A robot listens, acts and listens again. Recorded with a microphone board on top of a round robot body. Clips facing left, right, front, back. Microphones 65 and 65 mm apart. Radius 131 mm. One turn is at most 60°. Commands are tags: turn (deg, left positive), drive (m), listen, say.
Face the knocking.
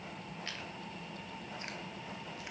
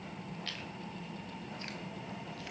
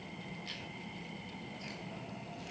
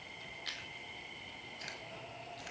<listen/>
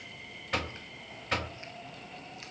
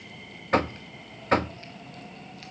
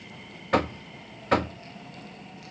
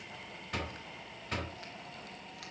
<turn deg="-35"/>
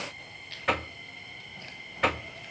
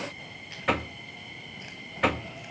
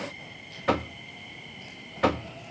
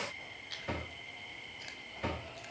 <say>Facing the knocking, under 1 m away.</say>